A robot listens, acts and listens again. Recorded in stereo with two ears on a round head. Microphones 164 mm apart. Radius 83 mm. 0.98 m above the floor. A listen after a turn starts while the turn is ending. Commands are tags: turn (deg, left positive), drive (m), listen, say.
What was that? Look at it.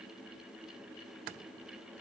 <listen/>
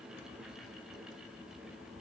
<listen/>
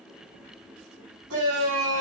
<turn deg="-90"/>
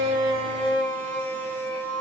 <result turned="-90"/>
<turn deg="10"/>
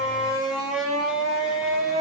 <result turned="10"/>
<say>Found it: a shout, straight ahead.</say>